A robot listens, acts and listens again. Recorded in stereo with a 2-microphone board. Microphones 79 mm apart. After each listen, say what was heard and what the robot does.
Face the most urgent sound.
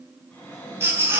The baby crying: about 35° right or 145° right. Turn 35° right.
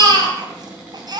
So it is at 110° right. Turn 110° right.
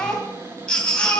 The baby crying is now 15° left. Turn 15° left.
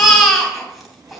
Facing the baby crying, 2 to 4 m away.